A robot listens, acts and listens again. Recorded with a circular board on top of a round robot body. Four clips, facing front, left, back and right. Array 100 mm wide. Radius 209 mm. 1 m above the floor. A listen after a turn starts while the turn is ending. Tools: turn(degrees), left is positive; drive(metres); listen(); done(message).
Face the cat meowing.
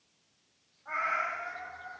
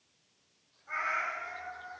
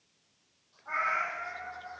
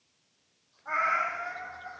turn(degrees=-75)
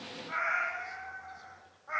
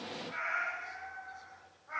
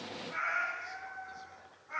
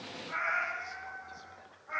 turn(degrees=-15)
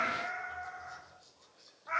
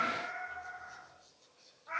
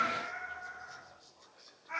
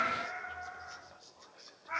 done("Facing the cat meowing, 2 to 4 m away.")